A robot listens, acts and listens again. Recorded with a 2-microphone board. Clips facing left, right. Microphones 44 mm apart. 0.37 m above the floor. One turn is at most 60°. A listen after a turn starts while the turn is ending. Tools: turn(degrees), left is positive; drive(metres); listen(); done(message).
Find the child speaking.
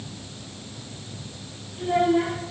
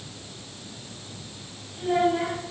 turn(degrees=15)
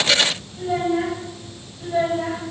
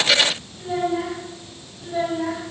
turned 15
turn(degrees=35)
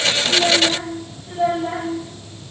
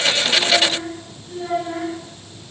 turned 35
turn(degrees=60)
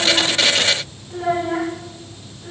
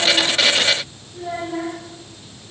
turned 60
turn(degrees=60)
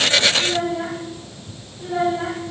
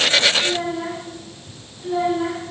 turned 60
done("Facing the child speaking.")